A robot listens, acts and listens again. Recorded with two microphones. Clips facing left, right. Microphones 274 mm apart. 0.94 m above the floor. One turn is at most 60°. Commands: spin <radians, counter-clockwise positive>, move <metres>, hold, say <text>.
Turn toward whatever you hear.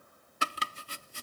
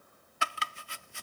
spin 0.70
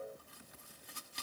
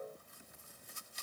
spin 1.05
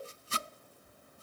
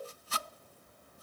spin 0.52
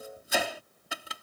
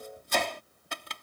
spin 0.17
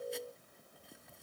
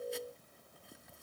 hold
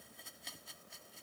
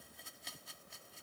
say Facing the chopping.